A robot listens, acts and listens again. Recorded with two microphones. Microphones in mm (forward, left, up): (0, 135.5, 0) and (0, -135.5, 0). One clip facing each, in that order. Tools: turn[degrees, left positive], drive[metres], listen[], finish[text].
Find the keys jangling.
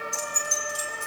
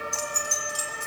Thought: The keys jangling: about 75° right or 105° right.
Action: turn[-75]
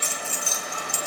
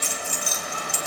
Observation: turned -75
Thought: So it is at 20° right.
Action: turn[-20]
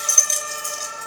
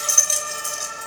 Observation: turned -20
Thought: The keys jangling is now 10° right.
Action: turn[-10]
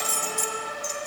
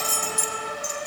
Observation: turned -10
Thought: The keys jangling is now 10° right.
Action: turn[-10]
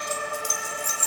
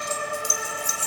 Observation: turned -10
Thought: The keys jangling is now 15° right.
Action: turn[-15]
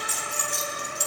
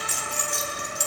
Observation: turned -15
Action: finish[Found it: keys jangling, straight ahead, 2 to 4 m away.]